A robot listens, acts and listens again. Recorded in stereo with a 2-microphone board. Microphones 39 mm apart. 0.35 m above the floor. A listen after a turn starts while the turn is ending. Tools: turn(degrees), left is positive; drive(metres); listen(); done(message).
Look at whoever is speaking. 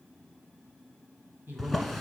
turn(degrees=-60)
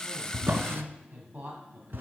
turn(degrees=-45)
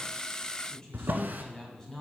turn(degrees=20)
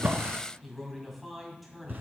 done("Found it: a man speaking, straight ahead, 2 to 4 m away.")